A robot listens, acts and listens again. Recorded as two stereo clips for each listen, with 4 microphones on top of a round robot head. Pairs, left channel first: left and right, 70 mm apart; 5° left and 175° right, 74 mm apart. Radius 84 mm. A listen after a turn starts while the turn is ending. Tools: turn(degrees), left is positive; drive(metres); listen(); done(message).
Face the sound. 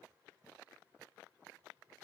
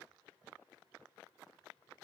listen()
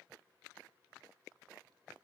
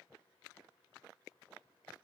listen()
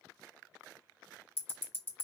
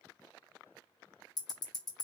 turn(degrees=30)
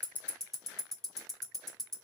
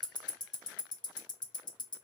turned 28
done("Facing the ticking.")